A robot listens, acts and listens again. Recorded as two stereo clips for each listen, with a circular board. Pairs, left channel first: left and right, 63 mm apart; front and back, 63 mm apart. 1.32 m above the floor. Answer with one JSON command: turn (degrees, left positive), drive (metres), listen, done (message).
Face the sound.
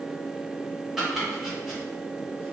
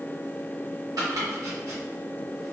{"turn": -175}
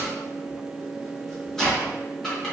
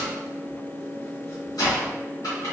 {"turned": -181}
{"done": "Facing the chopping."}